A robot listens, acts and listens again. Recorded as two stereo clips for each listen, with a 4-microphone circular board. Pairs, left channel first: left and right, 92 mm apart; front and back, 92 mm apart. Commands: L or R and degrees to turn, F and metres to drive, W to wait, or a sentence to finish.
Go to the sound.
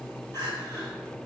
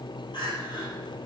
L25
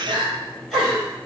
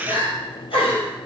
F1.0
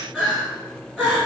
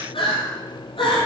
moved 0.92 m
F1.0
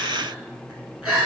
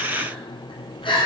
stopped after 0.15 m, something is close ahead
R10
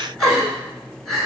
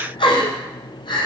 I am next to the crying.